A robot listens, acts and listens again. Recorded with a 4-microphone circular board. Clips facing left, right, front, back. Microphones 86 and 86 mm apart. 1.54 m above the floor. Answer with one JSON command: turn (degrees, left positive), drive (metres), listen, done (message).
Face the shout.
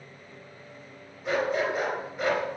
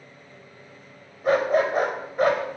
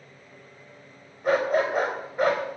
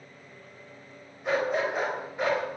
{"listen": true}
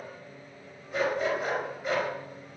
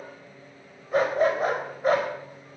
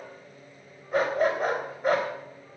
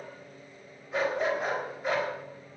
{"listen": true}
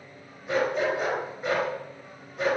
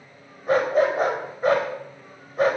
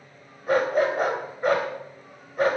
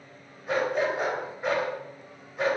{"done": "I can't make out a shout, only a dog barking."}